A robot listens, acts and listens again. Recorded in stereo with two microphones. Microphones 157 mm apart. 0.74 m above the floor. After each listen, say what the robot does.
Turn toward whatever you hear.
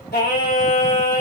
Turn 90° left.
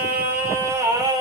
Turn 25° right.
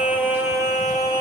Turn 25° right.
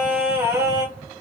Turn 20° right.
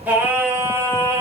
Turn 20° right.
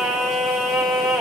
Facing the singing, 1 to 2 m away.